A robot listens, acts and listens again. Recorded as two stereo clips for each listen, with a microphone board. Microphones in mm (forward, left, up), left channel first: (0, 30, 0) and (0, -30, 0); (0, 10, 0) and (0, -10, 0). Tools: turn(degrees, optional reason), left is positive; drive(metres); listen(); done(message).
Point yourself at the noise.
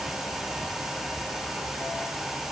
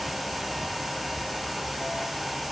listen()
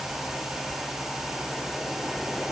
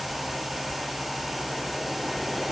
listen()
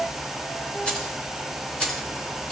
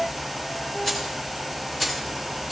turn(degrees=30)
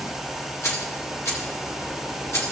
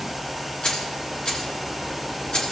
turn(degrees=135, reason="So it is at 135° left.")
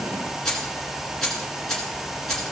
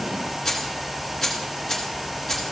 turn(degrees=10, reason="The keys jangling is now 10° left.")
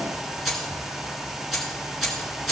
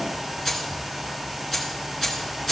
done("Found it: keys jangling, straight ahead, 2 to 4 m away.")